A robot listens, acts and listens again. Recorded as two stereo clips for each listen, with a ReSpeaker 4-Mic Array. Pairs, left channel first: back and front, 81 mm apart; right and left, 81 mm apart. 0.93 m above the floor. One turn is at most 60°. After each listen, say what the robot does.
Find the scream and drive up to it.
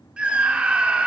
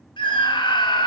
Turn 60° right.
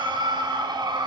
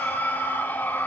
Turn 25° right.
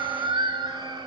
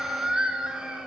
Turn 10° left.
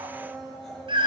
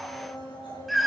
Drive 1.0 m forward.
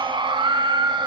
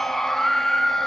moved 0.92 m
Drive 1.0 m forward.
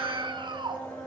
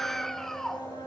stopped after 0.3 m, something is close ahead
I am next to the scream.